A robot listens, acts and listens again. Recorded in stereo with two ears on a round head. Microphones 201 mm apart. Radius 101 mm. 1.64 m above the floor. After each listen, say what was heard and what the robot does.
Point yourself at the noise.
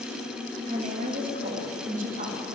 The woman speaking: about 35° right or 145° right. Turn 35° right.
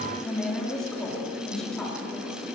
Found it: a woman speaking, straight ahead, over 4 m away.